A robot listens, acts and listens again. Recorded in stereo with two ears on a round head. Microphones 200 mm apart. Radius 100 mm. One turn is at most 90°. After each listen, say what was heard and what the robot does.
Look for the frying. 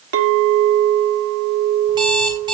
Keep listening.
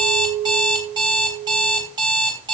Keep listening.
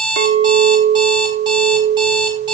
I can't make out frying, only an alarm clock and a clink.